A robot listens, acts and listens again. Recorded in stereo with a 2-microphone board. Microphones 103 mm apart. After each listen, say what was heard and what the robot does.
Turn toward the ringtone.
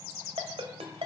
The ringtone: about 70° right or 110° right. Turn 70° right.
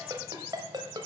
So it is at 45° right. Turn 45° right.
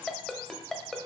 Found it: a ringtone, straight ahead, 1 to 2 m away.